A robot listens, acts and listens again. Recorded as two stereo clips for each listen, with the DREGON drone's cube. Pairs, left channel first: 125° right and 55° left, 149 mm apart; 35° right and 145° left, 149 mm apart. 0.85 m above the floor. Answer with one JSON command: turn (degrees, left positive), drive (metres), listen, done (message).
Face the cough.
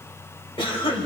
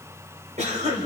{"turn": -175}
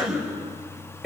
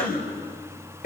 {"turn": -35}
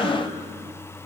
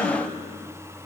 {"turn": -20}
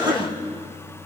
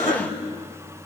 {"done": "Found it: a cough, straight ahead, over 4 m away."}